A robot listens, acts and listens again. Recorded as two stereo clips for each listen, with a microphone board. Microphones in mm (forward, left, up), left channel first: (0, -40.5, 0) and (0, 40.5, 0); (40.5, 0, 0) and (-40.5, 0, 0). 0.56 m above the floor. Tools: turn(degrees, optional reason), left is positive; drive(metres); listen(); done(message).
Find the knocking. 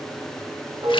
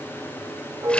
listen()
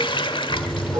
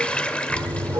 turn(degrees=-140, reason="The knocking: 140° right.")
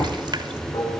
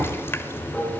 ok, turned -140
done("Found it: knocking, straight ahead.")